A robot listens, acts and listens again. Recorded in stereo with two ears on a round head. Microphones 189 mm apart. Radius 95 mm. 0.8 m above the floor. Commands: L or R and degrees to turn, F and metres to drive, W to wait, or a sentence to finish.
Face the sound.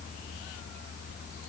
W
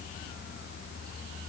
W
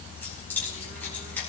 L30
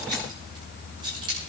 R25
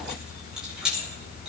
Found it: keys jangling, straight ahead, over 4 m away.